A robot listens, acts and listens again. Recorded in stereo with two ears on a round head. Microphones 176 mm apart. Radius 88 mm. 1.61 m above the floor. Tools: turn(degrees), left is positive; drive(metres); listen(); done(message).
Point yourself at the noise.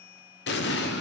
turn(degrees=60)
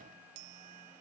listen()
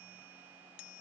done("I heard an explosion, but can't make it out now. It was about straight ahead or 60° left.")